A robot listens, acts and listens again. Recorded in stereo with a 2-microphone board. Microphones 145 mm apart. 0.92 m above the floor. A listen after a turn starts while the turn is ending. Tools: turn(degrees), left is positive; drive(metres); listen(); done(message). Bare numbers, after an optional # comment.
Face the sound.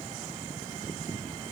listen()
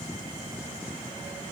listen()
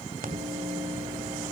# The microwave: about 75° right or 105° right.
turn(-75)
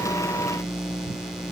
done("Facing the microwave, 2 to 4 m away.")